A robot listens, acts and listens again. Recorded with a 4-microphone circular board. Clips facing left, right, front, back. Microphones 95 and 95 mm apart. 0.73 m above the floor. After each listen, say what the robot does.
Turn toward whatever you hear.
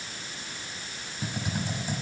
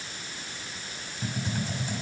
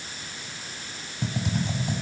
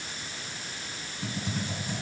Turn 15° left.
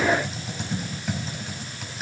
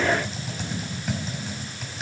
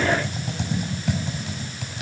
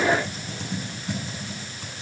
Found it: typing on a keyboard, straight ahead, over 4 m away.